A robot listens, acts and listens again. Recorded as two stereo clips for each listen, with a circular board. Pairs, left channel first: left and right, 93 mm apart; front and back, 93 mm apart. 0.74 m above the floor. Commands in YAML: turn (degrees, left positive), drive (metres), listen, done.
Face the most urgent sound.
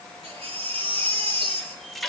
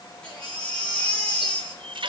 turn: -80
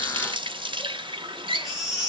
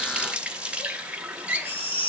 done: "Found it: a baby crying, straight ahead."